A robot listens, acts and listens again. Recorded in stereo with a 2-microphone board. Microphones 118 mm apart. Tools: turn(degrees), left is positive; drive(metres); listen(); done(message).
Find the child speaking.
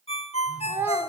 turn(degrees=-20)
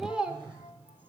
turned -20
turn(degrees=-30)
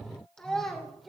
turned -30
done("Found it: a child speaking, straight ahead.")